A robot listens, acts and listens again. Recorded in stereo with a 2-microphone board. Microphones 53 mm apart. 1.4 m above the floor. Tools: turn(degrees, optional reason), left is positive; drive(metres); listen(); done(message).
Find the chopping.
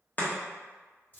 turn(degrees=35, reason="The chopping: about 35° left or 145° left.")
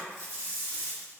listen()
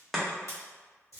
done("Facing the chopping.")